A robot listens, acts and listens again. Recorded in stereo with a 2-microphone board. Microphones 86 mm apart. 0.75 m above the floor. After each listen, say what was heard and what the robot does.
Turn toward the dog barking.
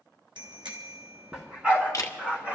The dog barking: about 20° right or 160° right. Turn 20° right.
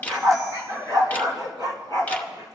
So it is at 125° right. Turn 125° right.
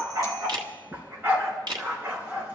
The dog barking is now 25° right. Turn 25° right.
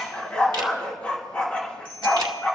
The dog barking is now 15° left. Turn 15° left.
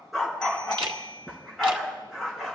Facing the dog barking.